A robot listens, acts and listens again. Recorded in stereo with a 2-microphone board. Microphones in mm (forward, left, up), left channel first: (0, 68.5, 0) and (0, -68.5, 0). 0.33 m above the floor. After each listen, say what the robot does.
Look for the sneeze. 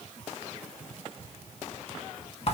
Keep listening.
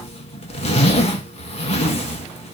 Keep listening.
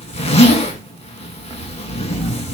I can't make out a sneeze to turn to.